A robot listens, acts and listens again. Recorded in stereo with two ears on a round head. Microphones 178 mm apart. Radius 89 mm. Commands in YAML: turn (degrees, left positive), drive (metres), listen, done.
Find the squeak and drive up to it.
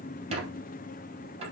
turn: -30
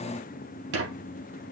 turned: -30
turn: -120
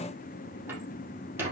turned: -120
turn: -10
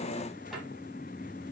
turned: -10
listen: true
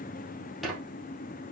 drive: 1.0
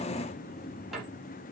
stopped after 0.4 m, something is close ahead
listen: true
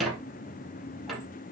done: "Blocked. The squeak is further on, straight ahead."